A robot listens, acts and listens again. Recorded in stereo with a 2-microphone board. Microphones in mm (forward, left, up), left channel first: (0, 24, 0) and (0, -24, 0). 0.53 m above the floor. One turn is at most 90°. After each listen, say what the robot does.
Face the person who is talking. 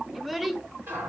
Turn 30° right.
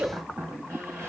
Turn 90° right.
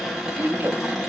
Turn 50° right.
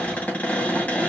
Keep listening.
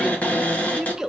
Turn 10° right.
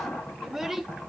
Facing the child speaking, under 1 m away.